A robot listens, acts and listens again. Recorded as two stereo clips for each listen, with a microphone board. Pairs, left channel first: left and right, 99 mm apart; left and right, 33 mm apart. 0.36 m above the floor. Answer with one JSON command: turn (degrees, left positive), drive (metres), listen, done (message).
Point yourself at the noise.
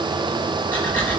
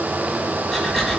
{"turn": 15}
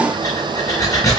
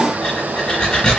{"turn": 145}
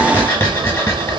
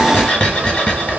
{"turn": 25}
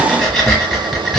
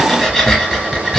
{"done": "Facing the breathing, 1 to 2 m away."}